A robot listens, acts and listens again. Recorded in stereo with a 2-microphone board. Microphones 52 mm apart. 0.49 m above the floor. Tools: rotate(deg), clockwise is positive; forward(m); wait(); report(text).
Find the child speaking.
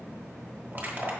wait()
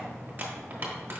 wait()
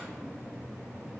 report("I can't make out a child speaking, only crushing.")